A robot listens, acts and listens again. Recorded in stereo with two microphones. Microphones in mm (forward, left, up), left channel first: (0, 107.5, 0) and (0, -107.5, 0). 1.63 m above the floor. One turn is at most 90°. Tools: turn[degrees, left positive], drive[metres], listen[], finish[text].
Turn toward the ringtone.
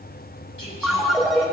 Action: turn[30]
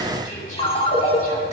Thought: So it is at 150° left.
Action: turn[90]
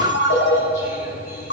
Thought: The ringtone is now 105° left.
Action: turn[90]
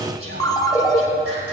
Thought: The ringtone is now 20° left.
Action: turn[20]
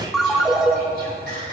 Action: finish[Facing the ringtone, 1 to 2 m away.]